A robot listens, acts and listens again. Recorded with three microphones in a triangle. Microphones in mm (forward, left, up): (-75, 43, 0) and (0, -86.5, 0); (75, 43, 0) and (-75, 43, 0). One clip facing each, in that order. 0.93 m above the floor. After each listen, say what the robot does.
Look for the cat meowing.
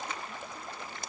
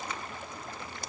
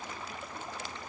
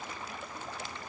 Keep listening.
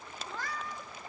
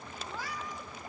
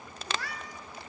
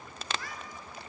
Turn 15° left.
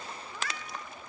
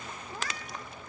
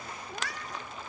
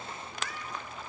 Turn 15° right.
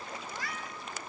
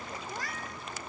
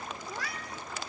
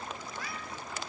Turn 15° right.
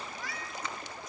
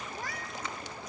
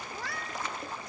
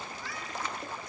Turn 20° right.
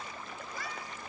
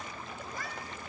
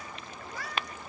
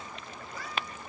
Turn 20° right.
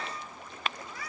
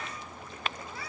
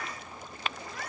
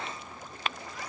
Found it: a cat meowing, straight ahead.